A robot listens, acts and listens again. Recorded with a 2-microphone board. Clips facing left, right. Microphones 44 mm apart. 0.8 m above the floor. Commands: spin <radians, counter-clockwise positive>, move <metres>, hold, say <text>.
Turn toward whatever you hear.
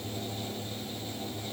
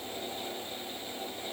hold
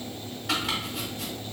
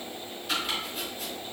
spin 1.57
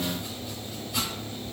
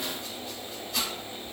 spin 0.17
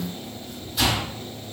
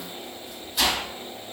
say Found it: chopping, straight ahead, 1 to 2 m away.